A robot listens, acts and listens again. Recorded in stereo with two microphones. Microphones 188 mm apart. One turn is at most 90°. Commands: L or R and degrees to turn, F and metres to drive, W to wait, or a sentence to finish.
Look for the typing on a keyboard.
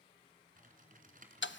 R45
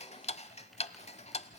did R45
W
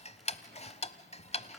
W
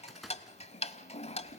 Facing the typing on a keyboard.